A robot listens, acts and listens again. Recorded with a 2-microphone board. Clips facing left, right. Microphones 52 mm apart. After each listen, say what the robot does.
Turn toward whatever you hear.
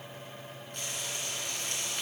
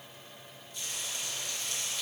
Turn 50° left.
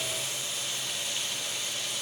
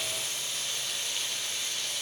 Facing the frying.